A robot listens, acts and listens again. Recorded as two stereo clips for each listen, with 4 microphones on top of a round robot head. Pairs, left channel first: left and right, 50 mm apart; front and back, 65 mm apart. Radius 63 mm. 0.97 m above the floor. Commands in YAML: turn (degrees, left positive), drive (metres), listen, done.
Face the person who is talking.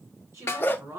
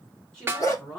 turn: -70
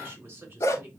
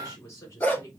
turn: -45
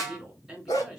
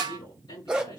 done: "Found it: a woman speaking, straight ahead."